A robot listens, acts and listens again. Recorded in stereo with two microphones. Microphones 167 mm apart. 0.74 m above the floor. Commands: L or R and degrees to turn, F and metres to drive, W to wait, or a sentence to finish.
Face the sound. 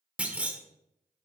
R30
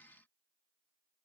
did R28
W
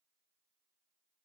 I heard a clunk, but can't make it out now. It was about 20° left or 145° right.